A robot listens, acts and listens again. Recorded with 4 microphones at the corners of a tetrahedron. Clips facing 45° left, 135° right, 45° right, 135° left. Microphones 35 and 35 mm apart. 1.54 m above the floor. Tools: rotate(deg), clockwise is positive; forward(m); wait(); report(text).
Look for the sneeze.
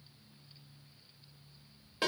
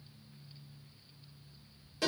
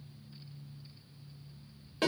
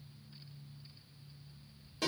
wait()
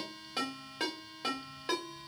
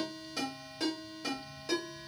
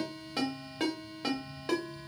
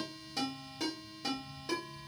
wait()
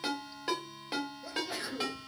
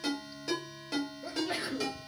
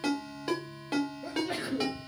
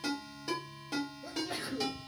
rotate(80)
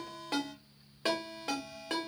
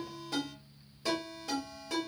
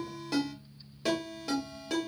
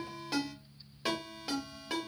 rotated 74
report("Facing where the sneeze came from. I can't hear it now.")